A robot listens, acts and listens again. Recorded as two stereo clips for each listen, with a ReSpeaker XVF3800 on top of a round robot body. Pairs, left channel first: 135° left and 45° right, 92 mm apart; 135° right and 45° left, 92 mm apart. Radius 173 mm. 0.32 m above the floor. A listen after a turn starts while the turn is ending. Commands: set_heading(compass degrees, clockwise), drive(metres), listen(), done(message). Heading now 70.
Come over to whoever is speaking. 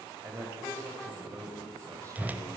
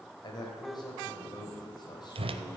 set_heading(170)
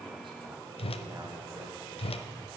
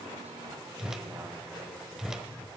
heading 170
listen()
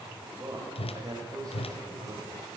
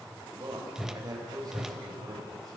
drive(1.0)
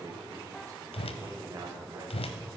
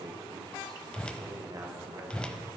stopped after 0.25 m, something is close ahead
done("Blocked. The man speaking is further on, straight ahead.")